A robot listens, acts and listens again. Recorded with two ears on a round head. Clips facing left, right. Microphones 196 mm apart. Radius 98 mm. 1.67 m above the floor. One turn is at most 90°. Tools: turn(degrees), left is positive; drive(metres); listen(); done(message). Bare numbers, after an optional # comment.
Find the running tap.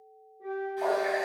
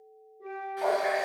turn(-30)
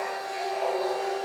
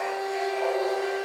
listen()
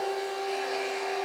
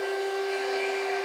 listen()
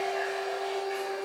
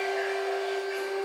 done("I heard a running tap, but can't make it out now. It was about 25° left or 145° right.")